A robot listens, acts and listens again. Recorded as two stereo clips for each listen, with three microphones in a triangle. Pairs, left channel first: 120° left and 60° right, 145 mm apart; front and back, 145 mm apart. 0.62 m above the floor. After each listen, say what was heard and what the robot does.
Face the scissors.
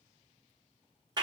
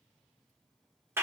Keep listening.
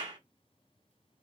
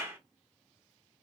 Keep listening.
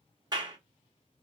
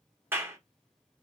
I can't make out scissors to turn to.